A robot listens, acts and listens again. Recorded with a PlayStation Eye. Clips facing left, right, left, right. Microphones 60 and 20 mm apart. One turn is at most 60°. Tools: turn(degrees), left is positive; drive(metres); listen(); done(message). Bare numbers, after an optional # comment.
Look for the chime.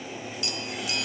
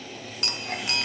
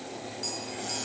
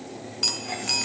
# The chime: about 60° right or 120° right.
turn(-60)
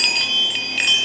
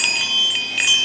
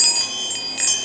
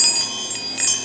done("Found it: a chime, straight ahead, under 1 m away.")